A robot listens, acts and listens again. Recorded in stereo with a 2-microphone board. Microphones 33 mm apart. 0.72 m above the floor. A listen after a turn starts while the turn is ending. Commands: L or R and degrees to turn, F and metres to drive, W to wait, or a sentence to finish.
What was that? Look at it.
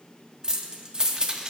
R25
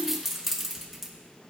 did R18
R10
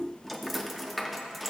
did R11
Facing the keys jangling.